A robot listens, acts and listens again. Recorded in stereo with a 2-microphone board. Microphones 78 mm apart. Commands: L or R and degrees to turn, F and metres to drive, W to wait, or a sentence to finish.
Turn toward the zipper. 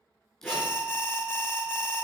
L30
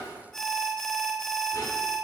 W
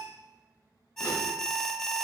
W
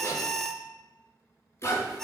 L145
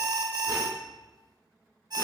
W
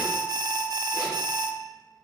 W
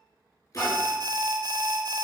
L45
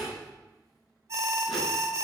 Facing the zipper, over 4 m away.